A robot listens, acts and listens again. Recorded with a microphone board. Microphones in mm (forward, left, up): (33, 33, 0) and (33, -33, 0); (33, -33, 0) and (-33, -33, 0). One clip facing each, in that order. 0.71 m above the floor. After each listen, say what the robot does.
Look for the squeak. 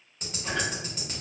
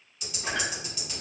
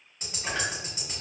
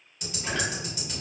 Turn 70° right.
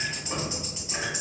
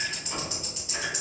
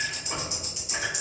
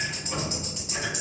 Turn 30° left.
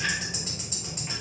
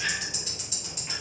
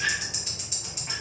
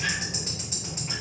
Turn 15° left.
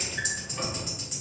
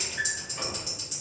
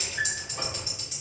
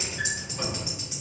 Facing the squeak.